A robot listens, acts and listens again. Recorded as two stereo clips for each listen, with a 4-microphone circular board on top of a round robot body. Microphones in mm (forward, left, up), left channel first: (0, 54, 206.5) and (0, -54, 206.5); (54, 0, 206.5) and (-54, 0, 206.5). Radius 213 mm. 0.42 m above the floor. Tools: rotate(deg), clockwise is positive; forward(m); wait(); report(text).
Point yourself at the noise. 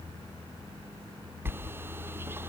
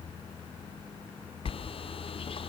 rotate(20)
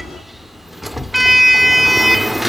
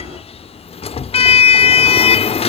report("Found it: a sliding door, straight ahead.")